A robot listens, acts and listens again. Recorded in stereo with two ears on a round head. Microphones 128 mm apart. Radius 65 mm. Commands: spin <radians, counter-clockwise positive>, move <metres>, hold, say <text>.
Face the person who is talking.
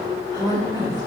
spin -0.44
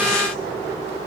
hold
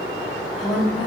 say Found it: a woman speaking, straight ahead, 2 to 4 m away.